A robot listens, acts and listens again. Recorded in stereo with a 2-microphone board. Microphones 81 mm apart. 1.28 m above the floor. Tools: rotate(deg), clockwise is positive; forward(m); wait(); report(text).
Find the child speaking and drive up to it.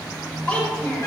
rotate(-20)
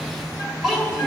forward(1.0)
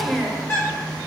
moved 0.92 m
forward(1.0)
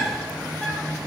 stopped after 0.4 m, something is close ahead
wait()
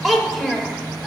report("Arrived at the child speaking, straight ahead.")